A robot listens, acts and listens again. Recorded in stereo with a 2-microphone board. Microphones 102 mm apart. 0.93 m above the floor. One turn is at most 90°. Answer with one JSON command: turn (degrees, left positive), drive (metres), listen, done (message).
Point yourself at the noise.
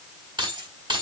{"turn": -50}
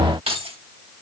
{"turn": -80}
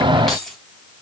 {"done": "Facing the keys jangling."}